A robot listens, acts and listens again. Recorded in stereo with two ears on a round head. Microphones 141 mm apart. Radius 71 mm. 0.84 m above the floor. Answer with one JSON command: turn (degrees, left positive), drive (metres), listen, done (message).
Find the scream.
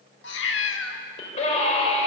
{"turn": 45}
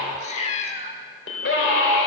{"turn": 85}
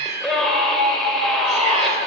{"done": "Facing the scream."}